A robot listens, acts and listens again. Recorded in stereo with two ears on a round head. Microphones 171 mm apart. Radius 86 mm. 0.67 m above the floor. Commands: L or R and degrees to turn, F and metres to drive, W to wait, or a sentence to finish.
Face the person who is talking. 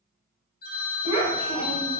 L35
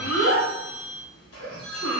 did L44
L100
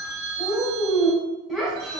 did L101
Facing the child speaking.